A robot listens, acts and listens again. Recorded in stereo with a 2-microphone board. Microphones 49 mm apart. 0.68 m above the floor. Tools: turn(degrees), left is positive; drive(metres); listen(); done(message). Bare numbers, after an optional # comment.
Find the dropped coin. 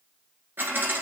# The dropped coin: about 45° right or 135° right.
turn(-45)
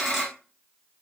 done("Facing the dropped coin.")